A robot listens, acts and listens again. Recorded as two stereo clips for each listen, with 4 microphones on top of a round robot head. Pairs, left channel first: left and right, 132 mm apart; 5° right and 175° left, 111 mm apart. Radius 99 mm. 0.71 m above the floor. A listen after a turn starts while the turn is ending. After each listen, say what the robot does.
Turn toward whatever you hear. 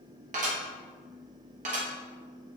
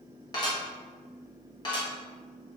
Turn 60° right.
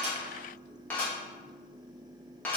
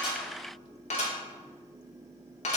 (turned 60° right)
Turn 10° left.
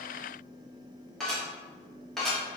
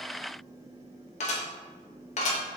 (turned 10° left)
Facing the dishes clattering.